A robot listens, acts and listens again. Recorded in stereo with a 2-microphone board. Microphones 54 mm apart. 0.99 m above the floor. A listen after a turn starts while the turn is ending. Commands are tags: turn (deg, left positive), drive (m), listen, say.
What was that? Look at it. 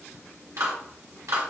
<turn deg="-70"/>
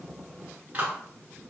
<turn deg="-30"/>
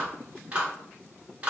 <turn deg="-25"/>
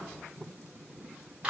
<turn deg="-20"/>
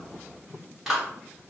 <say>Found it: a clap, straight ahead, 1 to 2 m away.</say>